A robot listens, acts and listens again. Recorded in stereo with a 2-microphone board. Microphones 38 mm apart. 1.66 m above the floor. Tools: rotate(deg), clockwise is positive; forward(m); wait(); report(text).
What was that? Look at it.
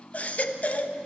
rotate(-45)
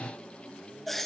report("Found it: a baby crying, straight ahead, 1 to 2 m away.")